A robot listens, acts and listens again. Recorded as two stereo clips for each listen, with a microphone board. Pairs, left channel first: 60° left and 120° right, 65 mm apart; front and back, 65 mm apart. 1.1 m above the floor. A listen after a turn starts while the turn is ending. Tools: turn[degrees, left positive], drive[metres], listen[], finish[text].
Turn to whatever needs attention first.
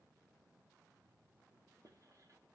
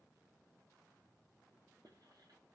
Action: listen[]
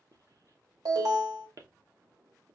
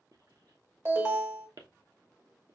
Thought: The alarm: 130° right.
Action: turn[-130]
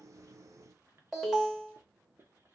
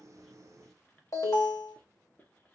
Thought: The alarm is now 35° right.
Action: turn[-35]
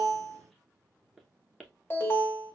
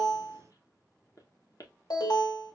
Action: finish[Found it: an alarm, straight ahead.]